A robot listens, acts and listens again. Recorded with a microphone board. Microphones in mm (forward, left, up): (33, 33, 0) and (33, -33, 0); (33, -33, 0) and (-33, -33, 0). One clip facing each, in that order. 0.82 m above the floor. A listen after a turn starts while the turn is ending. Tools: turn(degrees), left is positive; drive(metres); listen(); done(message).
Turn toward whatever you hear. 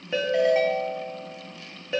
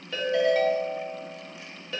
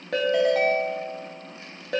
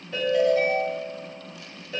turn(degrees=20)
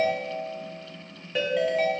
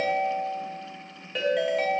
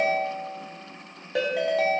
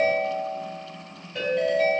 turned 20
done("Facing the ringtone.")